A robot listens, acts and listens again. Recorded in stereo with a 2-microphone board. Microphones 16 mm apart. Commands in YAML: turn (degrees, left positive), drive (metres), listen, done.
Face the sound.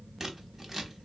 turn: -20
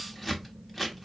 done: "Found it: scissors, straight ahead, 1 to 2 m away."